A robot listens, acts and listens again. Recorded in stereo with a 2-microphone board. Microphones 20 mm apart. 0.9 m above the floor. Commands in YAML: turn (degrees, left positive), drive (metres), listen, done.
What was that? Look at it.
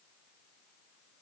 listen: true
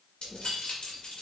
turn: 90
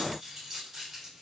turn: -15
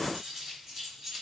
turn: -10
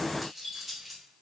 done: "Facing the keys jangling, 2 to 4 m away."